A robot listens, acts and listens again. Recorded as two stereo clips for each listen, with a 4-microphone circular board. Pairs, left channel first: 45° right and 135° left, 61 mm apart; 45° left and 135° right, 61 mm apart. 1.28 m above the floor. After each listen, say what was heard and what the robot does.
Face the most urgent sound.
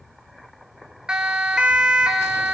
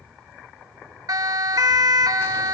The siren: 150° right. Turn 150° right.
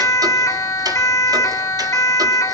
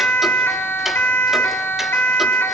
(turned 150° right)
The siren is now 10° right. Turn 10° right.
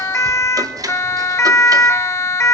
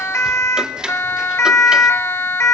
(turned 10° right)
Found it: a siren, straight ahead, 2 to 4 m away.